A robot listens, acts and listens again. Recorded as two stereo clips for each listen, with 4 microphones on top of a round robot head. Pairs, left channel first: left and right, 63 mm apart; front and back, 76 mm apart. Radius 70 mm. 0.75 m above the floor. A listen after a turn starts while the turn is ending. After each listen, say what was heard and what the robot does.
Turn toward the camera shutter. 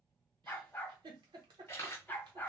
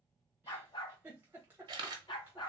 The camera shutter: 160° left. Turn 160° left.
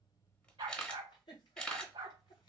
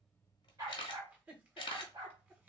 The camera shutter is now 15° left. Turn 15° left.
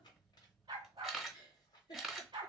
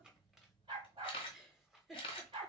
Found it: a camera shutter, straight ahead, under 1 m away.